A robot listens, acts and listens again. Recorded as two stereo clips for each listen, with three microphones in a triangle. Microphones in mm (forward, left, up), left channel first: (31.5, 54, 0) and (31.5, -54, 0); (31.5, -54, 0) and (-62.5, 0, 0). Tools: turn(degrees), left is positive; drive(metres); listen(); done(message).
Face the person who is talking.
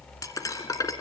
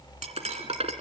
listen()
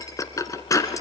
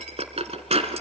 listen()
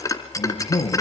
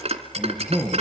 turn(degrees=60)
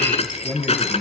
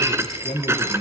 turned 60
done("Facing the man speaking.")